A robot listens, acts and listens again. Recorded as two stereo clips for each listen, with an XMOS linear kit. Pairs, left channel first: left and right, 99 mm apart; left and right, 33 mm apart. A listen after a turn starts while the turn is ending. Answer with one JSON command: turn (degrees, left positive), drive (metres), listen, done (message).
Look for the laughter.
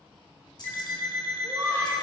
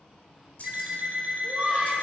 {"turn": -35}
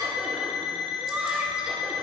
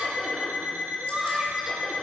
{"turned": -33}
{"turn": -10}
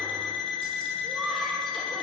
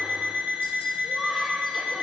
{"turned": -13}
{"listen": true}
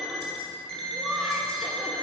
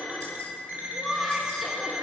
{"done": "Found it: laughter, straight ahead."}